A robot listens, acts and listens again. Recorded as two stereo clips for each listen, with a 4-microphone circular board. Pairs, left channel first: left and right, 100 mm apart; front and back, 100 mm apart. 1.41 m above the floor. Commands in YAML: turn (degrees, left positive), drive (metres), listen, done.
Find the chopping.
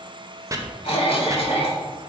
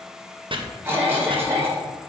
turn: -150
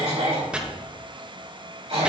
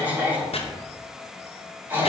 turn: -10
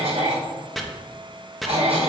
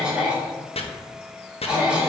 done: "Facing the chopping, 1 to 2 m away."